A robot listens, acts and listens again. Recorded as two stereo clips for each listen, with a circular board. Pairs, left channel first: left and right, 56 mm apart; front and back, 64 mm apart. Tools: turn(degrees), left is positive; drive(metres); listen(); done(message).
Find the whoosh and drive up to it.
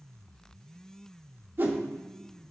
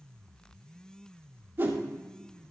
turn(degrees=-130)
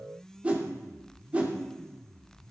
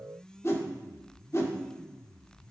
turn(degrees=-30)
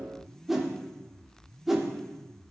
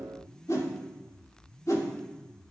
drive(metres=1.0)
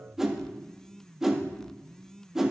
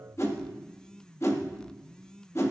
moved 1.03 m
turn(degrees=-10)
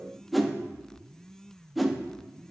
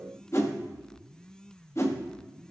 drive(metres=1.0)
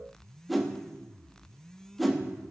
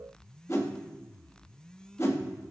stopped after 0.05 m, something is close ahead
done("Arrived at the whoosh, straight ahead.")